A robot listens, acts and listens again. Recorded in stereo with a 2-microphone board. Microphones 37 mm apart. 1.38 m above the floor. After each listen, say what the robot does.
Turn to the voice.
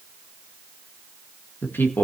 Turn 90° left.
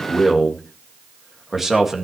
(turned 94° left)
Turn 10° right.
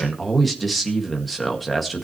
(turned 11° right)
Found it: a man speaking, straight ahead.